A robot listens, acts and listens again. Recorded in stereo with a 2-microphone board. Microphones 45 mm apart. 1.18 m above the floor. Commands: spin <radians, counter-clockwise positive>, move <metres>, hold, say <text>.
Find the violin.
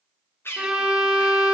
spin -0.35
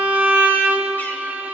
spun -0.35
spin -2.44
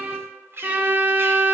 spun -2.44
spin -0.70
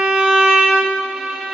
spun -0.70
spin -0.17
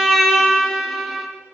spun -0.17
say Found it: a violin, straight ahead.